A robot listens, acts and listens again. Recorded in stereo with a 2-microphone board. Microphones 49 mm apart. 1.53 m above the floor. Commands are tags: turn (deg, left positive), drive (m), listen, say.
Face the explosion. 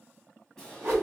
<turn deg="30"/>
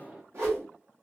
<turn deg="-20"/>
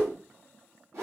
<say>Facing where the explosion came from. I can't hear it now.</say>